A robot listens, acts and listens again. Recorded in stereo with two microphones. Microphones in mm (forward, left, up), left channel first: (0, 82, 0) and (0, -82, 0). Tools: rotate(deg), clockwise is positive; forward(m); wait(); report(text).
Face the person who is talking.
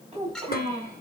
rotate(35)
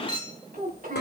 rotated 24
rotate(120)
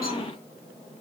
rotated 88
rotate(35)
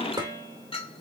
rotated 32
wait()
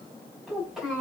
report("Found it: a child speaking, straight ahead.")